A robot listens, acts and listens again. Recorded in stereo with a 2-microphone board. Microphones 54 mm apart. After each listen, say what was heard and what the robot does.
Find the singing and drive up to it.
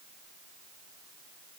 Keep listening.
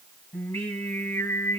The singing: about 35° left or 145° left. Turn 35° left.
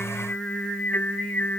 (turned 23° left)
So it is at 15° left. Turn 15° left.
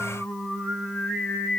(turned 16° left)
Drive 1.0 m forward.
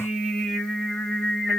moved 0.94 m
Drive 1.0 m forward.
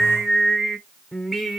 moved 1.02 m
Drive 1.0 m forward.
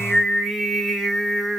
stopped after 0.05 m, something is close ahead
Arrived at the singing, straight ahead.